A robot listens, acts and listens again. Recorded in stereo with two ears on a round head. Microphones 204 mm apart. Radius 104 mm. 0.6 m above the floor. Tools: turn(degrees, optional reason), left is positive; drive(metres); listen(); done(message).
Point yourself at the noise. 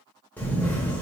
turn(degrees=30)
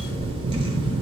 turn(degrees=-25, reason="So it is at 25° right.")
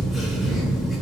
done("Found it: a camera shutter, straight ahead, under 1 m away.")